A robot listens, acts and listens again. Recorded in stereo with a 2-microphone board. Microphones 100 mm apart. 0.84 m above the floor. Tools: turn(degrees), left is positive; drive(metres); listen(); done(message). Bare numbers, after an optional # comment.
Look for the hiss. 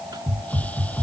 turn(30)
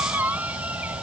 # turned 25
listen()
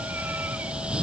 # So it is at 10° right.
turn(-10)
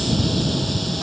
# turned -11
done("Facing the hiss.")